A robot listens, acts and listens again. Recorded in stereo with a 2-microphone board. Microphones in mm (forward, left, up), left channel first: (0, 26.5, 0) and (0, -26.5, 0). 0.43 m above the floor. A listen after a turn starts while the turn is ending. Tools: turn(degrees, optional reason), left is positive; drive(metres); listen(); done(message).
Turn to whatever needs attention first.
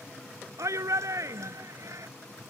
turn(degrees=-70, reason="The shout: about 70° right or 110° right.")
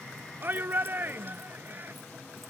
turn(degrees=-40, reason="So it is at 40° right.")
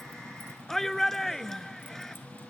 done("Found it: a shout, straight ahead.")